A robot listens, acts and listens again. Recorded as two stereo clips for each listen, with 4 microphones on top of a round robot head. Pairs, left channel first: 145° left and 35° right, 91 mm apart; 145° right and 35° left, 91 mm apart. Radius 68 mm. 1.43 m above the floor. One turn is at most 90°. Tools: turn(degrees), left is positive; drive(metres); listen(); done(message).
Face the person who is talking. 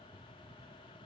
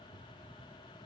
listen()
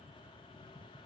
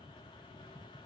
listen()
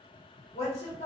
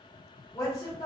turn(degrees=90)
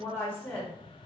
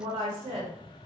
turn(degrees=70)
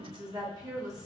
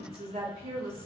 turn(degrees=20)
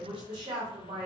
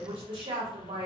done("Found it: a woman speaking, straight ahead.")